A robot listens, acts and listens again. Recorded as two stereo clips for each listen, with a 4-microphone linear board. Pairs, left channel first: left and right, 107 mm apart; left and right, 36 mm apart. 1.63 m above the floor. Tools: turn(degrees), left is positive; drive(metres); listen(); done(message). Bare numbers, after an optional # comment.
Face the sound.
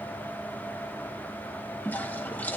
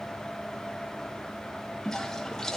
# The toilet flushing: about 15° left or 165° left.
turn(15)
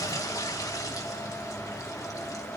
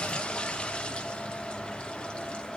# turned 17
# So it is at 150° left.
turn(150)
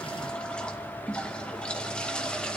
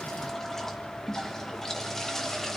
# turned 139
# The toilet flushing is now 10° left.
turn(10)
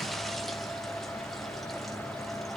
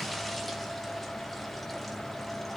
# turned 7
listen()
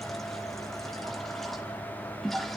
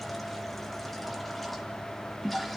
done("Facing the toilet flushing.")